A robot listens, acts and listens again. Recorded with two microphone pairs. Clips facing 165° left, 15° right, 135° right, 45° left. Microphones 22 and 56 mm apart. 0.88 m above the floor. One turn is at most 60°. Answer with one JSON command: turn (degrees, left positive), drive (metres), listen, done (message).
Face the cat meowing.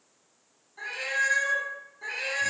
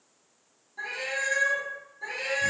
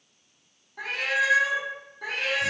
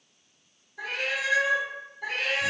{"turn": -60}
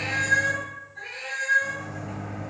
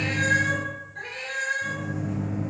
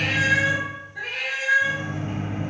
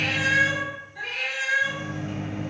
{"turn": -60}
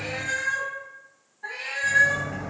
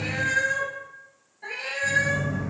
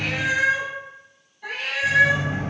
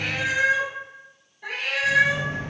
{"turn": -30}
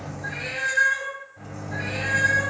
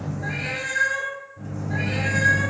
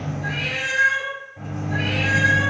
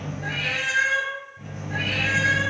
{"done": "Facing the cat meowing."}